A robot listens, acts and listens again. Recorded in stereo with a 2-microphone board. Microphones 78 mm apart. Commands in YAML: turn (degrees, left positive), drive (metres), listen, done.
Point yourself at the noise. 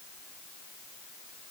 listen: true
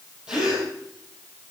turn: -30
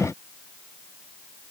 listen: true
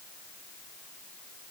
done: "I heard a gasp, but can't make it out now. It was about 20° left or 140° right."